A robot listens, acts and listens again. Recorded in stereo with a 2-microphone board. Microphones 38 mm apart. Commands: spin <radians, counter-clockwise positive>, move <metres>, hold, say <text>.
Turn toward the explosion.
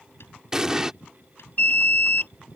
spin -0.52
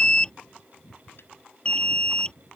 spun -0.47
hold
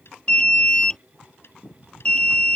say I heard an explosion, but can't make it out now. It was about 15° left or 140° right.